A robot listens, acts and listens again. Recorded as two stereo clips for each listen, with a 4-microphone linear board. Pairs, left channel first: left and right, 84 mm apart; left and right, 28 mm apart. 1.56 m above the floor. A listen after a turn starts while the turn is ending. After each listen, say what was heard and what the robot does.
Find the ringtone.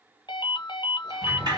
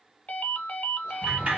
The ringtone: about 60° left or 120° left. Turn 60° left.
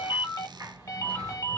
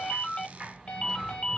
So it is at 45° left. Turn 45° left.
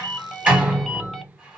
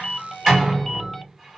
Keep listening.
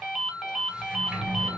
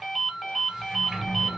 Facing the ringtone.